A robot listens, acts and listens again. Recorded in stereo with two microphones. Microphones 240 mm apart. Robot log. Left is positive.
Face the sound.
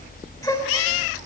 cmd yaw +30
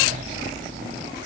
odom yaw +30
cmd idle
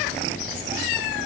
end: I heard a gasp, but can't make it out now. It was about 15° right or 135° left.